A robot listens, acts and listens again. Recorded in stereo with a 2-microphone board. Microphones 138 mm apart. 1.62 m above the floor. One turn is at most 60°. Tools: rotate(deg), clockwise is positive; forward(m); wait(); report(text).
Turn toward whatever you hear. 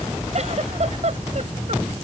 rotate(50)
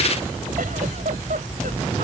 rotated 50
rotate(60)
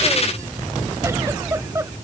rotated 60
rotate(20)
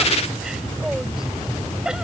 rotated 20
report("Facing the giggle.")